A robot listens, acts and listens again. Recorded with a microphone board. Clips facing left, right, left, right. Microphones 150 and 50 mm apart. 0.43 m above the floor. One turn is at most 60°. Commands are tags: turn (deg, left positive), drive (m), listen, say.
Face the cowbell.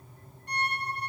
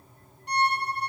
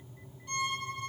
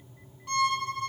<listen/>
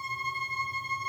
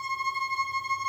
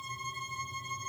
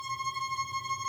<listen/>
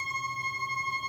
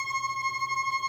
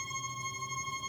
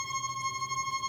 <say>I can't make out a cowbell to turn to.</say>